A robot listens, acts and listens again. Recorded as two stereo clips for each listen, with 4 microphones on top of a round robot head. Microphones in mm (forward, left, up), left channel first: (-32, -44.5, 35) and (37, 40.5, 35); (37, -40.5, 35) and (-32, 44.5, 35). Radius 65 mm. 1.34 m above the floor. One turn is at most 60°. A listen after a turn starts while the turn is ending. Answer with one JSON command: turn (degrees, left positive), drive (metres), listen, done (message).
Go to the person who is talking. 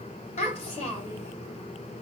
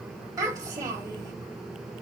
{"turn": -60}
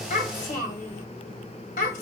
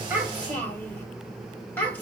{"turn": -60}
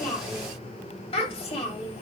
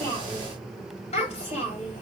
{"turn": -60}
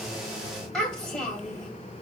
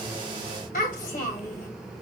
{"turn": -40}
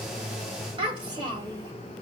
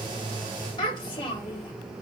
{"drive": 1.0}
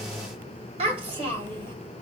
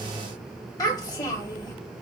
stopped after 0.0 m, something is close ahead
{"turn": 10}
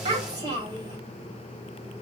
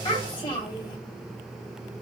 {"done": "Something is in my way. I am facing the child speaking but have not reached it."}